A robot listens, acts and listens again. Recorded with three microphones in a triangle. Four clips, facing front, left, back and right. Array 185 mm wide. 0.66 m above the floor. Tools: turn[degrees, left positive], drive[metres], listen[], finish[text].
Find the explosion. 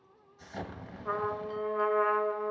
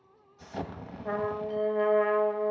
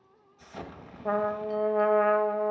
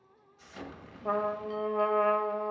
Thought: The explosion: 80° left.
Action: turn[80]
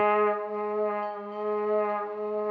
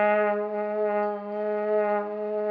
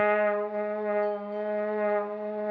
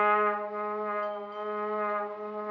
Action: finish[Facing where the explosion came from. I can't hear it now.]